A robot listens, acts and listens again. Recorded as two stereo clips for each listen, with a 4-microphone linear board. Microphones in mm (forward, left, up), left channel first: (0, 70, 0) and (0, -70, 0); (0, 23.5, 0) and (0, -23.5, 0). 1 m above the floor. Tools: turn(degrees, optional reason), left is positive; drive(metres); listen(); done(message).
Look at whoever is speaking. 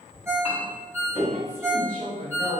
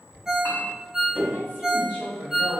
turn(degrees=-50, reason="The woman speaking: about 50° right or 130° right.")
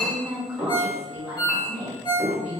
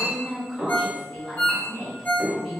turn(degrees=-10, reason="So it is at 10° right.")
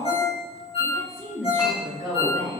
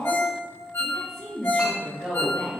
done("Found it: a woman speaking, straight ahead, 1 to 2 m away.")